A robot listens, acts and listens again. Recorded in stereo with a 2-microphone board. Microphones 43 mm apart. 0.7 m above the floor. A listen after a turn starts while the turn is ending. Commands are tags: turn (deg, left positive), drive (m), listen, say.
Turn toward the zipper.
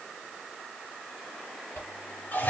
<listen/>
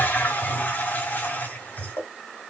<turn deg="90"/>
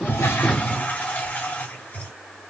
<listen/>
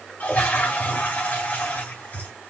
<listen/>
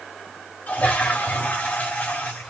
<say>Facing where the zipper came from. I can't hear it now.</say>